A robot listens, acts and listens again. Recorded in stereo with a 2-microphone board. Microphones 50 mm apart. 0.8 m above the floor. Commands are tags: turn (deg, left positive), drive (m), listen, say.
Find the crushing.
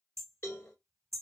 <listen/>
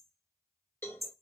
<listen/>
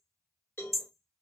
<say>I can't make out crushing to turn to.</say>